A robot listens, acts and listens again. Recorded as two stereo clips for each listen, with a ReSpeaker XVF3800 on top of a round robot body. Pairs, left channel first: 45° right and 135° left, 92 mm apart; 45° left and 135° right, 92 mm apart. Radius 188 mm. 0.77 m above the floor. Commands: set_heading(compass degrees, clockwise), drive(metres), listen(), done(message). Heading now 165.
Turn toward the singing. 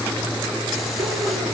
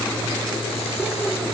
listen()
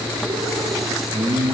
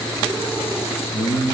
set_heading(75)
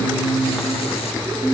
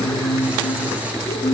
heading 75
set_heading(85)
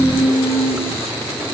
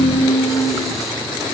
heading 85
done("Found it: singing, straight ahead, over 4 m away.")